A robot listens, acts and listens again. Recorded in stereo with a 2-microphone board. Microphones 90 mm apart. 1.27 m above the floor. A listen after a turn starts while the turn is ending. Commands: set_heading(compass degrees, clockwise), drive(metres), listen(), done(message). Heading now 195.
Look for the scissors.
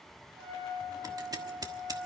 set_heading(240)
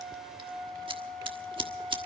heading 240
set_heading(330)
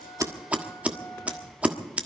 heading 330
set_heading(345)
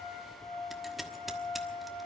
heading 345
listen()
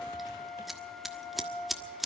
done("Found it: scissors, straight ahead, 1 to 2 m away.")